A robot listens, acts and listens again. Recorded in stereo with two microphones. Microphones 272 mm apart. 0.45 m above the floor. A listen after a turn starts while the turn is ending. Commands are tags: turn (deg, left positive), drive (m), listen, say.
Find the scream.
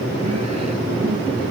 <listen/>
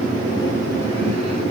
<listen/>
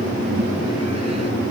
<say>I can't make out a scream to turn to.</say>